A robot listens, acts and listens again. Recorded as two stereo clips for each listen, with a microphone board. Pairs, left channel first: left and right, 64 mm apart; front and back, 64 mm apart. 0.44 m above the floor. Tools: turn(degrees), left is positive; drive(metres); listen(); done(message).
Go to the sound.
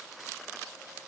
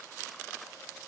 listen()
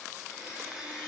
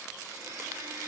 turn(degrees=-165)
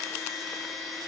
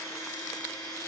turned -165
drive(metres=1.0)
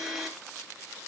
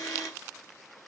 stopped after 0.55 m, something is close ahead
done("Something is in my way. I am facing the blender but have not reached it.")